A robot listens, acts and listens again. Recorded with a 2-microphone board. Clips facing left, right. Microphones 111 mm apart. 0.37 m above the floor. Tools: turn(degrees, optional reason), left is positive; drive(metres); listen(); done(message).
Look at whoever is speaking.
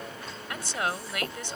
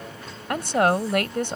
turn(degrees=-55, reason="The woman speaking: about 55° right or 125° right.")
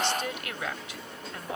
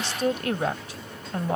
turn(degrees=-45, reason="So it is at 45° right.")
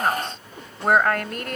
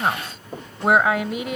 done("Found it: a woman speaking, straight ahead.")